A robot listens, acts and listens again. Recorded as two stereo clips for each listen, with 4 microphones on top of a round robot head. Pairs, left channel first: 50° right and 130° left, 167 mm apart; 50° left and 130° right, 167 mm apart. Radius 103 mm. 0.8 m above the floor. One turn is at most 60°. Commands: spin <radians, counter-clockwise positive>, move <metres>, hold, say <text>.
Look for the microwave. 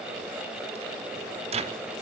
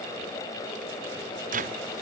spin -1.05
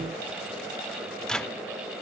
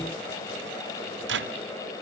spin -1.05
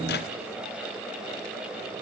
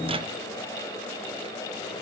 spin -1.05
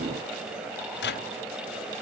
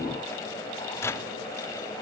spin -0.52
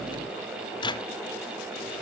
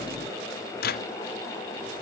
spin 0.26
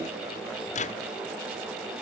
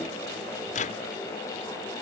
say Found it: a microwave, straight ahead, 1 to 2 m away.